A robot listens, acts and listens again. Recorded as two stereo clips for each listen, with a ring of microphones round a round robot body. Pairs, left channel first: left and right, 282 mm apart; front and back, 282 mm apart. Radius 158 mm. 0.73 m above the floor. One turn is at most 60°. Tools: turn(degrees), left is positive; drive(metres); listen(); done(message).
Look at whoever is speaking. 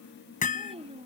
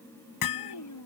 turn(degrees=-20)
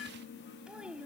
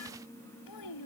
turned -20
done("Found it: a child speaking, straight ahead.")